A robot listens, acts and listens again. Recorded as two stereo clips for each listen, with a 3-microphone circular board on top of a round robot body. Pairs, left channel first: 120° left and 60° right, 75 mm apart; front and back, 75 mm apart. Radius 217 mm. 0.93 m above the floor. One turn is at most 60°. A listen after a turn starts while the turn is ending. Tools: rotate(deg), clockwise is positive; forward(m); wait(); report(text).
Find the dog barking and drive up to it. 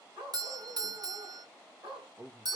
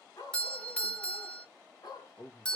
rotate(40)
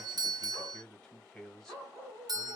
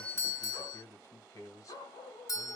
forward(1.0)
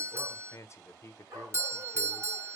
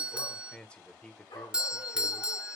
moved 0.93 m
rotate(10)
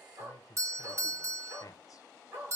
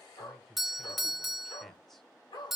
forward(1.0)
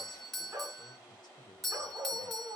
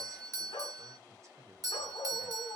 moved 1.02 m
forward(1.0)
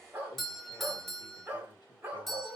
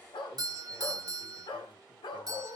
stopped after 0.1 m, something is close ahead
report("Arrived at the dog barking, straight ahead.")